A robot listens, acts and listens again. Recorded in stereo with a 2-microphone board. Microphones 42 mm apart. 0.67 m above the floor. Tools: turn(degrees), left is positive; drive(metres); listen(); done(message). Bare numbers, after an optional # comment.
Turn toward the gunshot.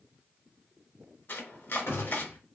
# The gunshot: about 65° left or 115° left.
turn(65)
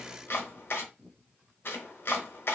listen()
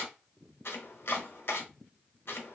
done("I heard a gunshot, but can't make it out now. It was about straight ahead or 50° left.")